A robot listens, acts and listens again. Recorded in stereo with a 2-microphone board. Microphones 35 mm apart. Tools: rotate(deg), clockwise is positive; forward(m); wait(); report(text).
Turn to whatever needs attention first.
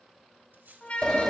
rotate(-40)
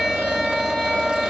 wait()
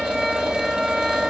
wait()
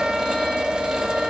report("I heard a siren, but can't make it out now. It was about straight ahead or 100° left.")